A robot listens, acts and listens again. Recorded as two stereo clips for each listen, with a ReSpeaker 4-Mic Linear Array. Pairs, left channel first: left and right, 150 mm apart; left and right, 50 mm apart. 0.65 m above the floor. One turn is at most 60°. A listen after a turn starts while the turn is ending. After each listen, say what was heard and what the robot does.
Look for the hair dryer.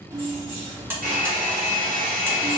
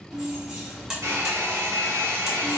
The hair dryer: about 70° right or 110° right. Turn 60° right.
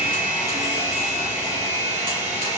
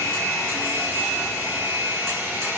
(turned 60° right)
So it is at 50° right. Turn 50° right.
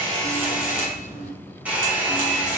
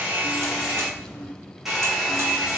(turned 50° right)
The hair dryer is now 10° right. Turn 10° right.
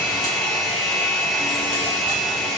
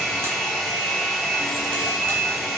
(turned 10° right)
Found it: a hair dryer, straight ahead, 1 to 2 m away.